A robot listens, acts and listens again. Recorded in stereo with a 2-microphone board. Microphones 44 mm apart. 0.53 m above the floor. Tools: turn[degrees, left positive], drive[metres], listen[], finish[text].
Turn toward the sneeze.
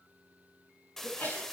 Thought: The sneeze: about 50° left or 130° left.
Action: turn[50]
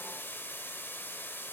Action: listen[]
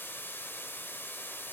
Action: finish[I heard a sneeze, but can't make it out now. It was about straight ahead or 80° left.]